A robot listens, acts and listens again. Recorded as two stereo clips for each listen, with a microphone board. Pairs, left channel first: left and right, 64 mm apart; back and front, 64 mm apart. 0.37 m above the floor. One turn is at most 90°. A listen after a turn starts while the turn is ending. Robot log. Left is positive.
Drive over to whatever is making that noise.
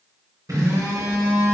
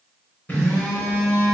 note: The phone buzzing: 120° right.
cmd yaw -90
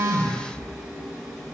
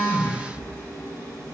cmd fwd 1.0
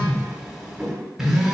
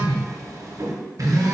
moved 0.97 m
note: The phone buzzing is now 10° right.
cmd yaw -10
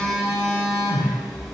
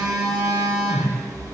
cmd fwd 1.0
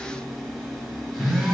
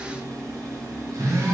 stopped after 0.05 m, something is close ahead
end: Arrived at the phone buzzing, straight ahead.